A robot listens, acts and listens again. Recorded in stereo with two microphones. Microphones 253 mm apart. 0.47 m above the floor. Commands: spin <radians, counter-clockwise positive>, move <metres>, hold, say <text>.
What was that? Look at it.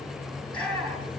spin -0.35
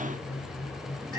spin -2.53
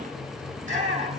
spin -0.52
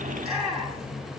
say Facing the shout, over 4 m away.